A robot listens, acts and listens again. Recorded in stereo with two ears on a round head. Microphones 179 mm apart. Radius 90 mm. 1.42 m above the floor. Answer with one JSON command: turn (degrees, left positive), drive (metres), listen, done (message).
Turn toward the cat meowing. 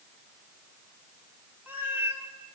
{"turn": -30}
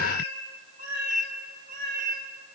{"turn": -130}
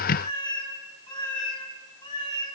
{"turn": 25}
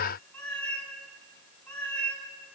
{"done": "Facing the cat meowing, over 4 m away."}